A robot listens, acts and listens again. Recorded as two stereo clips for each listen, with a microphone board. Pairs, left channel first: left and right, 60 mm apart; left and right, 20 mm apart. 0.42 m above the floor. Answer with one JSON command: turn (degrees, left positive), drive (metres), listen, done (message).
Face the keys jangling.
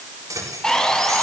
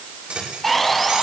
{"turn": -90}
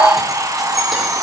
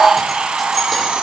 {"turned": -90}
{"listen": true}
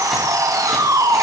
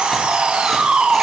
{"listen": true}
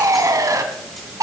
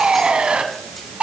{"done": "I heard keys jangling from this way, but can't make it out now."}